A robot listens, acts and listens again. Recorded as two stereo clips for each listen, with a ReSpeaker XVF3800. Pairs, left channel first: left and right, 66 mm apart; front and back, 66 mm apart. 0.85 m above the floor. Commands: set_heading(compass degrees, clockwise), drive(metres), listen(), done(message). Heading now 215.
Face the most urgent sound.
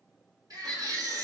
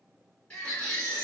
set_heading(285)
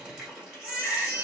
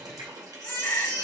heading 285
set_heading(300)
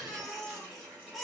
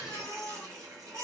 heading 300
done("Found it: a baby crying, straight ahead, 2 to 4 m away.")